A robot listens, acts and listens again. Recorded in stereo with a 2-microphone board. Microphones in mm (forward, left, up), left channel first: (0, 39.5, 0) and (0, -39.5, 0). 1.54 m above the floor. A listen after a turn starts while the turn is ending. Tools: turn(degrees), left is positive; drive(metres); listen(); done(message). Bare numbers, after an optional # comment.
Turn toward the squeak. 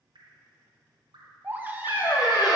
# The squeak: about 65° left or 115° left.
turn(65)
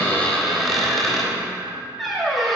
done("Found it: a squeak, straight ahead.")